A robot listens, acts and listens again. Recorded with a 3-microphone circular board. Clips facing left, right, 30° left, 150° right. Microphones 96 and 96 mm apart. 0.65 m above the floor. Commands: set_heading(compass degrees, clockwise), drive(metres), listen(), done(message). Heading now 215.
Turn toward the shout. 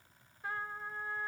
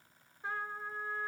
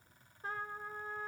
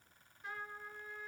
listen()
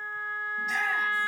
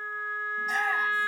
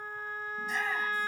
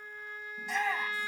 set_heading(355)
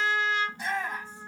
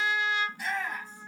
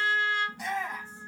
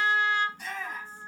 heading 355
set_heading(330)
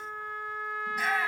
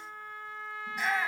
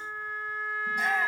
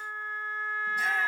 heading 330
done("Facing the shout, over 4 m away.")